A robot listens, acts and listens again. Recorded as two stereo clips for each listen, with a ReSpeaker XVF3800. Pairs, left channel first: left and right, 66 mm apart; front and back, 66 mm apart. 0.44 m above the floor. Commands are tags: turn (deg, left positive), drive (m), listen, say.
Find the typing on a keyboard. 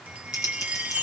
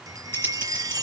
<turn deg="55"/>
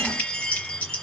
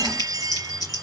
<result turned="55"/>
<turn deg="20"/>
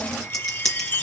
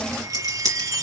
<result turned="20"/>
<say>Found it: typing on a keyboard, straight ahead, 2 to 4 m away.</say>